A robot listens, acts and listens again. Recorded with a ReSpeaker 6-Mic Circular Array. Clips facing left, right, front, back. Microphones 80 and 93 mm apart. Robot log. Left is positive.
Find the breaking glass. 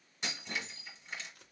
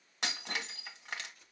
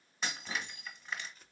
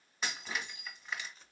note: The breaking glass: 90° right.
cmd yaw -90
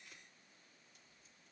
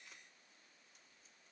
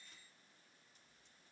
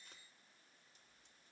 end: I heard breaking glass from this way, but can't make it out now.